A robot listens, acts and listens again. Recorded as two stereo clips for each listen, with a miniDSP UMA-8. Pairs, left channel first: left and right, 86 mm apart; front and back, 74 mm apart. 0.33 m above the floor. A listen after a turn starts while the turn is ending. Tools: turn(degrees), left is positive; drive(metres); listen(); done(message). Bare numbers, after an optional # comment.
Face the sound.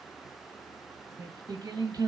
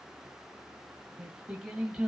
# The singing: 95° right.
turn(-95)
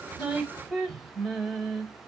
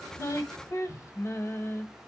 done("Found it: singing, straight ahead.")